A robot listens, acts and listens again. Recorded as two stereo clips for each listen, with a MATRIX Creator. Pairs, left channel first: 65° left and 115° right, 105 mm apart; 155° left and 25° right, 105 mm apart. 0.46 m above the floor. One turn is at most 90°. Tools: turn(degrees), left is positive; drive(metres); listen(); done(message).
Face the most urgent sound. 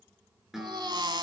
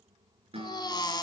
turn(degrees=-90)
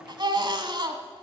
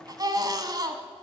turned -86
turn(degrees=-70)
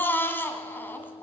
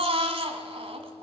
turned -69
done("Found it: a baby crying, straight ahead, 1 to 2 m away.")